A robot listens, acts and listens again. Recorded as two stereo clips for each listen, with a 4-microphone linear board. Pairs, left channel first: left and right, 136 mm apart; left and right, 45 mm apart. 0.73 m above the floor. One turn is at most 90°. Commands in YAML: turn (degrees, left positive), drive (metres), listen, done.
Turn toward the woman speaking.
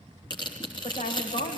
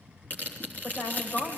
turn: 90
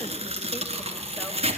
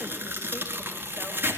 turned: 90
listen: true
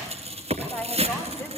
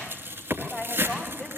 turn: 20
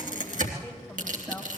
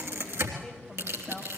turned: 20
done: "Facing the woman speaking, over 4 m away."